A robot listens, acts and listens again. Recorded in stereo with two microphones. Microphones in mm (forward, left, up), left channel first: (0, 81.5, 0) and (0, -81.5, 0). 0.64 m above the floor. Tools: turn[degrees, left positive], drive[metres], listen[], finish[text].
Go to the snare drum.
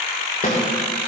Thought: The snare drum: about 50° left or 130° left.
Action: turn[50]
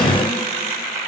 Action: listen[]
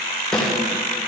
Action: drive[1.0]
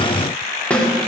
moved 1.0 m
Thought: The snare drum is now 10° left.
Action: turn[10]
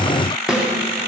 Action: drive[1.0]
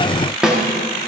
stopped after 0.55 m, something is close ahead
Action: finish[I am next to the snare drum.]